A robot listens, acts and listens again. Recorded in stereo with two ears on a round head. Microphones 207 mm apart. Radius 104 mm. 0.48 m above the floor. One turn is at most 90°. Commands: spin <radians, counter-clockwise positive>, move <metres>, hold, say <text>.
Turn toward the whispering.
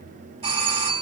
hold
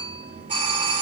hold
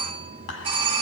spin 1.31
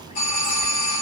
hold
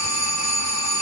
hold
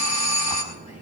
say I heard whispering, but can't make it out now. It was about straight ahead or 30° left.